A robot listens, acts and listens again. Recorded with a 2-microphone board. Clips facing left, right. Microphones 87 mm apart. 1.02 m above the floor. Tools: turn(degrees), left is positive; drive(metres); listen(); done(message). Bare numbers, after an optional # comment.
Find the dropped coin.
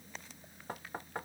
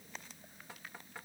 listen()
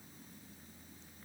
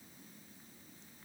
listen()
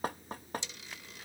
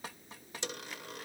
# The dropped coin: about 55° right or 125° right.
turn(-55)
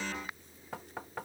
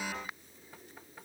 listen()
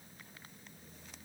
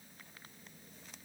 done("I heard a dropped coin, but can't make it out now. It was about straight ahead or 70° right.")